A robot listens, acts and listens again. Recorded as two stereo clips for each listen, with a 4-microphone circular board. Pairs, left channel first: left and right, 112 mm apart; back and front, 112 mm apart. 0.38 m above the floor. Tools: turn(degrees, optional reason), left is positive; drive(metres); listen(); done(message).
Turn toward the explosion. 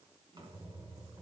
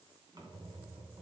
listen()
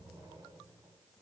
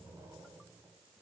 listen()
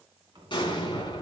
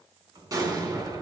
turn(degrees=55, reason="The explosion: 55° left.")
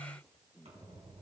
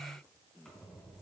done("I heard an explosion from this way, but can't make it out now.")